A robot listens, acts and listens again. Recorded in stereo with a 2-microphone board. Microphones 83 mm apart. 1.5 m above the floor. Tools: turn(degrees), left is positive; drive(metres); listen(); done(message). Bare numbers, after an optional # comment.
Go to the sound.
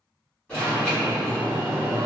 # The alarm: about 20° left or 160° left.
turn(20)
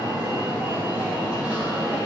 # So it is at 140° left.
turn(140)
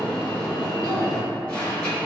# The alarm is now 15° left.
turn(15)
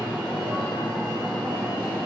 drive(1.0)
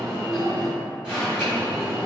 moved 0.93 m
# The alarm is now 10° right.
turn(-10)
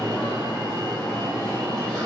drive(1.0)
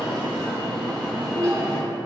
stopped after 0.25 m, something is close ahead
done("Arrived at the alarm, straight ahead.")